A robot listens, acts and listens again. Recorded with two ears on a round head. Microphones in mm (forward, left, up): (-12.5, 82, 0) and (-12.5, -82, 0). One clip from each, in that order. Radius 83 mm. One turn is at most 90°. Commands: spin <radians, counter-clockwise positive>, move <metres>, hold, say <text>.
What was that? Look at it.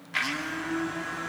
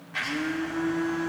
spin 1.31
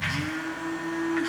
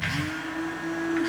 say Facing the blender.